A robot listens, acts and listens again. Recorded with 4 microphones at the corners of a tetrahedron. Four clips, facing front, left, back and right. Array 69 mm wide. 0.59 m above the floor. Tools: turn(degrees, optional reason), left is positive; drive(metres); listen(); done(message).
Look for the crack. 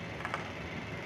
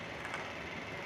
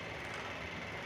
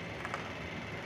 listen()
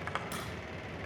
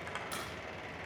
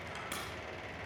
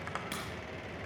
turn(degrees=-120, reason="The crack: 120° right.")
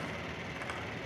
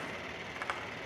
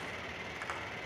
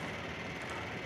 done("Facing where the crack came from. I can't hear it now.")